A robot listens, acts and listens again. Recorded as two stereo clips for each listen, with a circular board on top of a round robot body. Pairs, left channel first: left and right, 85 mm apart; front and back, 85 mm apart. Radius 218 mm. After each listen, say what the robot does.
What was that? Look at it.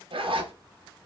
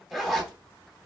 Turn 90° right.
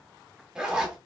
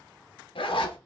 Found it: a zipper, straight ahead, 1 to 2 m away.